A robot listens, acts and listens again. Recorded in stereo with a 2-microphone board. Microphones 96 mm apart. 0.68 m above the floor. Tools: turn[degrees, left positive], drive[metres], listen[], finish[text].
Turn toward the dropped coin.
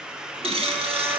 Thought: The dropped coin: about 75° right or 105° right.
Action: turn[-75]
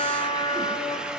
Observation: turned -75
Action: listen[]
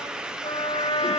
Action: finish[I heard a dropped coin, but can't make it out now. It was about straight ahead or 30° right.]